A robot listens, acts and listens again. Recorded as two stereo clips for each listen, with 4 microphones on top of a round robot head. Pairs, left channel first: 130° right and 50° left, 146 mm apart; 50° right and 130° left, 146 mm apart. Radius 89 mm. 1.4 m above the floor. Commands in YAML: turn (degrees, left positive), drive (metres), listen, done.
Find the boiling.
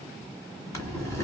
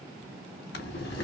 turn: -60
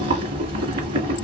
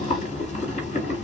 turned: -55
done: "Facing the boiling."